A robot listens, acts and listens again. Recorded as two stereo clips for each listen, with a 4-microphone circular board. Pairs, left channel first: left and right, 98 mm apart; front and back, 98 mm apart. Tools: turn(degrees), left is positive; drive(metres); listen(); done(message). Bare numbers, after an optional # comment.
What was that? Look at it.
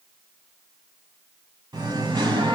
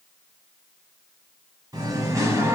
# The singing: 120° right.
turn(-120)
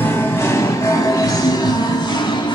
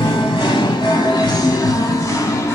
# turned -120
# The singing is now 60° left.
turn(60)
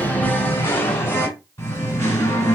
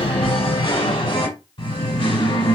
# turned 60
# The singing is now 30° left.
turn(30)
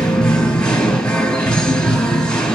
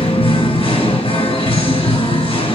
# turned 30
# The singing is now 10° left.
turn(10)
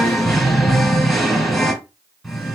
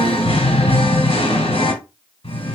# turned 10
done("Facing the singing, 1 to 2 m away.")